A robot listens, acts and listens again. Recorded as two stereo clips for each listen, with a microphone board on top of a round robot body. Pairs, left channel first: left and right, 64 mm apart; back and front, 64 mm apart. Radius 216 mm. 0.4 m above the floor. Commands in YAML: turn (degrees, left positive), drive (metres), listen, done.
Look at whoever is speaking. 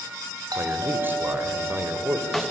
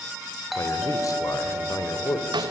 turn: -150
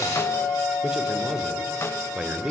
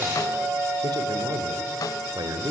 turn: -10
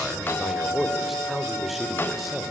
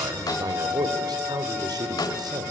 done: "Facing the man speaking."